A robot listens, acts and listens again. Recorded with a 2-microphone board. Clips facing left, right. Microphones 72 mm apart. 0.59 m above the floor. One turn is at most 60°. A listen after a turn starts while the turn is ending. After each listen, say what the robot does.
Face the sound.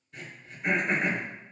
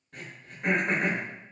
Turn 60° right.
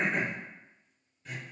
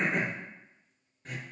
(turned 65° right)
Turn 50° right.
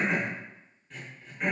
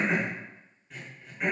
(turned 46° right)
Facing the throat clearing.